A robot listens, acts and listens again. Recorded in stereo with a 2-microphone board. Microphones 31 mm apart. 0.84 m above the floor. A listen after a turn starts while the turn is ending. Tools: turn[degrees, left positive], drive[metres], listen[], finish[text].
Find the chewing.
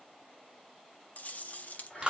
Thought: The chewing: about 55° left or 125° left.
Action: turn[55]
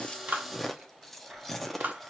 Thought: So it is at 10° left.
Action: turn[10]
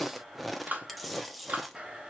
Action: finish[Facing the chewing.]